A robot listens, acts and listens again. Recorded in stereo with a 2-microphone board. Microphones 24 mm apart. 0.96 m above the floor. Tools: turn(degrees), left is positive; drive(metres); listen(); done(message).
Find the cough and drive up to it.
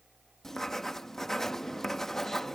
listen()
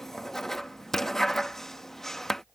listen()
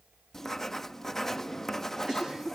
turn(degrees=-30)
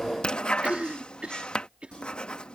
turn(degrees=-120)
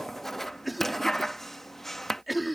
drive(metres=1.0)
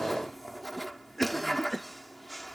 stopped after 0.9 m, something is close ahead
done("Arrived at the cough, straight ahead.")